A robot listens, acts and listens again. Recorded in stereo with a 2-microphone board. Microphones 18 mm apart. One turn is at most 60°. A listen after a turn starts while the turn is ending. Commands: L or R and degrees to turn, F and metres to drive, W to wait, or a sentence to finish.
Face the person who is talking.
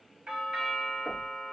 W
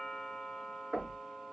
W
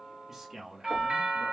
R25
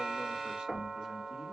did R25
W
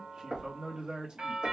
R60
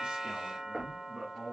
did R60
R60
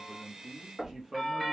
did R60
R25
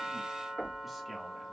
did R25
W
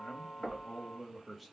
Found it: a man speaking, straight ahead.